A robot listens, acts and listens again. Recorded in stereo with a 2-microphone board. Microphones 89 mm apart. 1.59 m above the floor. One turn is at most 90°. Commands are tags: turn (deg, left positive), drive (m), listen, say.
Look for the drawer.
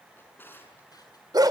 <turn deg="25"/>
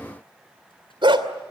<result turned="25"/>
<listen/>
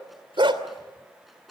<say>Facing the drawer.</say>